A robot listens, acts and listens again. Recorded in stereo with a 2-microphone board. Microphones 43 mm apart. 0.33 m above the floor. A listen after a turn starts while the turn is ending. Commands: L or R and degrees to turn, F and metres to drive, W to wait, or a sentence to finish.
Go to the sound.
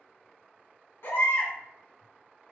L65
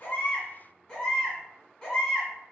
L20
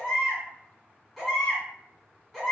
F1.0
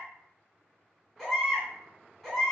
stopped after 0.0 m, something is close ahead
Blocked. The baby crying is further on, straight ahead.